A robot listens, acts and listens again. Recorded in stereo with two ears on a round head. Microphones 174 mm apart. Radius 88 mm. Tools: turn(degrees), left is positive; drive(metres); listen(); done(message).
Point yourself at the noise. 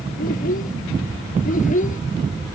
turn(degrees=45)
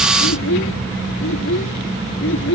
turn(degrees=105)
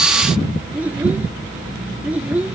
turn(degrees=-10)
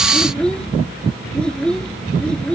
done("Found it: a child speaking, straight ahead.")